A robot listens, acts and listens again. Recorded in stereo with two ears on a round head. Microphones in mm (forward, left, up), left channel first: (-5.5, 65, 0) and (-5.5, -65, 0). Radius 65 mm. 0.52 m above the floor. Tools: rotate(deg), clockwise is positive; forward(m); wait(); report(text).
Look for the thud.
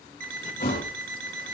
rotate(-65)
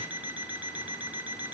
wait()
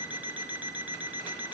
report("I heard a thud, but can't make it out now. It was about straight ahead or 50° left.")